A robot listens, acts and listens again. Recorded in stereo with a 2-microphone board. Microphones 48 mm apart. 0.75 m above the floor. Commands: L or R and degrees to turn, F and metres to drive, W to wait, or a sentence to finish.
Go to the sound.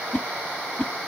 L50
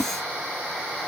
L80
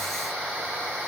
W
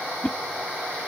L30
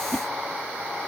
W
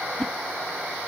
L15
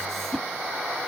L10
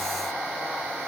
W
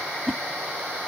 F1.0
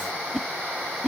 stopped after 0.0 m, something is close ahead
Blocked. The whoosh is further on, straight ahead.